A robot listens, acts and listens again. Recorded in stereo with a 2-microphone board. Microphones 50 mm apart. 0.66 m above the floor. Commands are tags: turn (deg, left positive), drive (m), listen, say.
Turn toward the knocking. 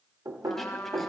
<turn deg="-70"/>
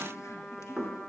<turn deg="-25"/>
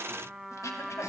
<listen/>
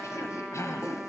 <listen/>
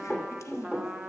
<say>Found it: knocking, straight ahead.</say>